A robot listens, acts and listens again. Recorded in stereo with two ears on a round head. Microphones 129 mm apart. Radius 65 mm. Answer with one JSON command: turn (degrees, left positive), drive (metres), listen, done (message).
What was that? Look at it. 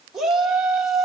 {"turn": -30}
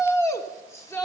{"turn": 25}
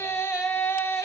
{"turn": 25}
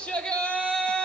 {"turn": 10}
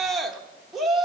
{"done": "Facing the shout."}